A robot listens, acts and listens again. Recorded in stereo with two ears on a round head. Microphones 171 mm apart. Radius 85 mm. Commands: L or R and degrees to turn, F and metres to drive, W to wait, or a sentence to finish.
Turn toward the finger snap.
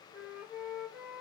W
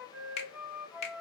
L35
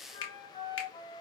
L110
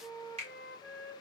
R35
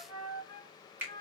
R10
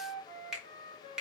Facing the finger snap, 1 to 2 m away.